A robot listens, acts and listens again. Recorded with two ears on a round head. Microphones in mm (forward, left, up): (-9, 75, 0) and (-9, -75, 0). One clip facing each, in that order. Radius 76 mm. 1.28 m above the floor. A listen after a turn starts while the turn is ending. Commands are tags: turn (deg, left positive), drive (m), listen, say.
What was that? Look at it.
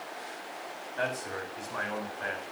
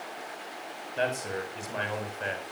<turn deg="-30"/>
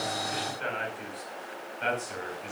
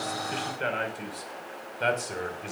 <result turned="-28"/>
<turn deg="-135"/>
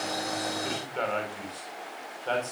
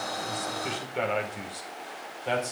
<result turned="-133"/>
<turn deg="-15"/>
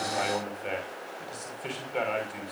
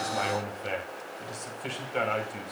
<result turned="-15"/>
<say>Facing the man speaking, over 4 m away.</say>